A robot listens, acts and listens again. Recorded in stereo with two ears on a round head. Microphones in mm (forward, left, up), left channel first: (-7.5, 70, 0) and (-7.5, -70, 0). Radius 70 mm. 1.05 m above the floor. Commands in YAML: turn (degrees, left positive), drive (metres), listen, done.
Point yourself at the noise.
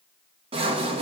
turn: -40
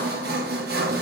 turn: -105
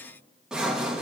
done: "Found it: sawing, straight ahead."